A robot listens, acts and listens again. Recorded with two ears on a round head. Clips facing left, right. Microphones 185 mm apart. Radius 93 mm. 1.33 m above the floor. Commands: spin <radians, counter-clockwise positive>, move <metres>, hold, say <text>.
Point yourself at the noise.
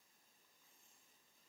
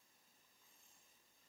hold
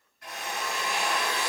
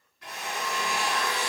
spin -0.96
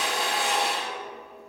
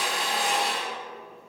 spin -0.17
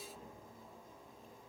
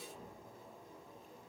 hold
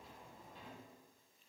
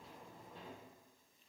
hold
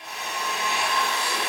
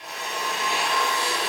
say Facing the drill.